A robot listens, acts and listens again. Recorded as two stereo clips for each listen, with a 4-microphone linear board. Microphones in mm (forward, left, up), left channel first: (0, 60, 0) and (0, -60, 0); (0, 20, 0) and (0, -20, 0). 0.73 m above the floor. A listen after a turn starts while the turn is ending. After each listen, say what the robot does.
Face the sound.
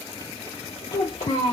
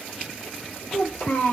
Turn 75° left.
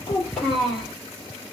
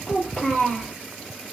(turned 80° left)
Facing the child speaking, 1 to 2 m away.